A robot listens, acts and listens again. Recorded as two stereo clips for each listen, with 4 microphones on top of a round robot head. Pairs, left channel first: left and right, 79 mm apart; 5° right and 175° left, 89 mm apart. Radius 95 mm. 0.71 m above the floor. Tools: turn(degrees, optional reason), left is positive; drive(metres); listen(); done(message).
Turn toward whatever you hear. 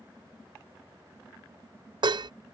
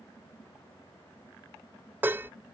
turn(degrees=-115, reason="The dishes clattering: 115° right.")
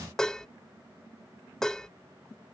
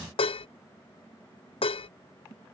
done("Facing the dishes clattering.")